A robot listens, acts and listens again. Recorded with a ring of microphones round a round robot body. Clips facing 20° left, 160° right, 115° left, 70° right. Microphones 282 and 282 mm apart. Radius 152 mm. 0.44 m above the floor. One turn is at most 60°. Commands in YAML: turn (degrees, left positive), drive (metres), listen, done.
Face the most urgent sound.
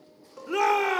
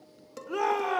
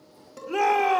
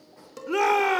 turn: -15
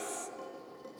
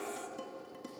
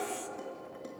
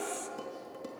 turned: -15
done: "Found it: a shout, straight ahead."